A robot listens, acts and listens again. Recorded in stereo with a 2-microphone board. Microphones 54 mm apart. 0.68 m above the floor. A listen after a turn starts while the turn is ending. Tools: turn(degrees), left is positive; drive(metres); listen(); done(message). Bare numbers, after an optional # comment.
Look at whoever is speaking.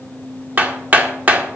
listen()
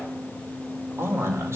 # The man speaking: about 55° right or 125° right.
turn(-55)
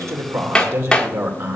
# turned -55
# So it is at 60° right.
turn(-60)
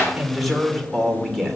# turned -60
done("Found it: a man speaking, straight ahead.")